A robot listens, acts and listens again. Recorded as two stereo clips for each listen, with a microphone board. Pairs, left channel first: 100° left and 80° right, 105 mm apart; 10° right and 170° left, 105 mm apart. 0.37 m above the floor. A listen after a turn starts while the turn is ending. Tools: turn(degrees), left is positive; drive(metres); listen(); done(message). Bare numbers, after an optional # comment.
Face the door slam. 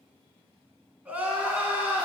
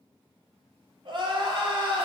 listen()
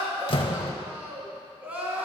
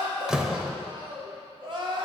# The door slam: 85° left.
turn(85)
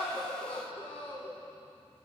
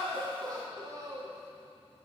done("Facing where the door slam came from. I can't hear it now.")